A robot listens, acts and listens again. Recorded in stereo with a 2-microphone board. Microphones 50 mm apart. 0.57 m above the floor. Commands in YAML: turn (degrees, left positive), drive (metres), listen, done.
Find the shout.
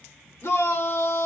turn: 60
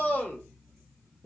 turn: 35
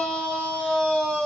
turn: 15
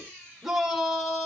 done: "Found it: a shout, straight ahead."